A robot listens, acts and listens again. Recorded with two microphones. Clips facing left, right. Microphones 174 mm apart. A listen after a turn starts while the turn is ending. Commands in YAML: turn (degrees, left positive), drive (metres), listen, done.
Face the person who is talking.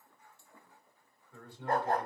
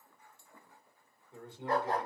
turn: -20
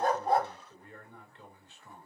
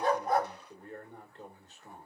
turn: -130
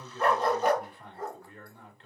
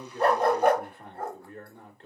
turn: -55
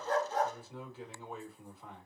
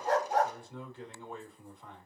done: "Found it: a man speaking, straight ahead."